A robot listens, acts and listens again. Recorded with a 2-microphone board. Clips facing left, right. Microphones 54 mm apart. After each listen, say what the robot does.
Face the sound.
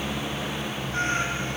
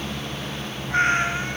Turn 45° right.
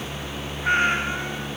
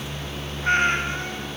Found it: a cat meowing, straight ahead, 2 to 4 m away.